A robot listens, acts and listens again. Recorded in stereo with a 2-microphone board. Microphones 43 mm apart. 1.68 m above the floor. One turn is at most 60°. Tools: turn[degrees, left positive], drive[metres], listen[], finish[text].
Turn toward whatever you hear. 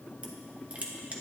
Thought: The crushing: about 35° right or 145° right.
Action: turn[-35]
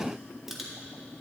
Action: finish[Facing the crushing, 1 to 2 m away.]